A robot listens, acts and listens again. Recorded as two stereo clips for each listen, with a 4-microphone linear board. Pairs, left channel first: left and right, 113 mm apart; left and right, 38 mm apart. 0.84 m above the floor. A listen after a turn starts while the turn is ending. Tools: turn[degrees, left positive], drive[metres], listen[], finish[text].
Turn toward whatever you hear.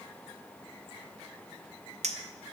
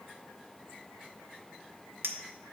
Action: turn[-90]
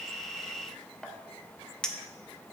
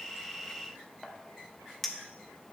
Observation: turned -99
Action: finish[Found it: a clink, straight ahead, under 1 m away.]